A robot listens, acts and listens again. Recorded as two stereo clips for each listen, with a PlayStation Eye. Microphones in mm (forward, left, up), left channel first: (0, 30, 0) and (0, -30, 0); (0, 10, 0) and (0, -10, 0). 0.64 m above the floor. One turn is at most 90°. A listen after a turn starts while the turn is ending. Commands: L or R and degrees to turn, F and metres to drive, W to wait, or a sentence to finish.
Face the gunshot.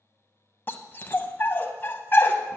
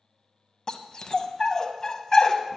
W
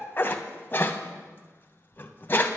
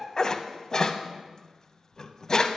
W
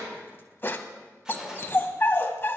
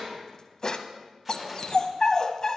R30
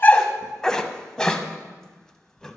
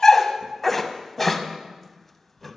W
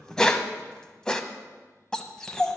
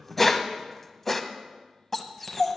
I heard a gunshot, but can't make it out now. It was about 20° left or 140° right.